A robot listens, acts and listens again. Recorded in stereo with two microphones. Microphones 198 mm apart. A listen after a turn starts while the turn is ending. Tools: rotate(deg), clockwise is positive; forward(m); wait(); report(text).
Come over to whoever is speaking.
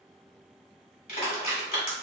wait()
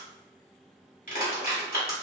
wait()
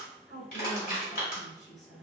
rotate(-60)
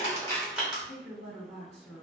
rotate(-40)
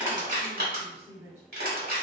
rotate(10)
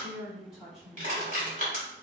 forward(1.0)
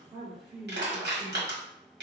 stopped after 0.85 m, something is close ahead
report("Arrived at the woman speaking, straight ahead.")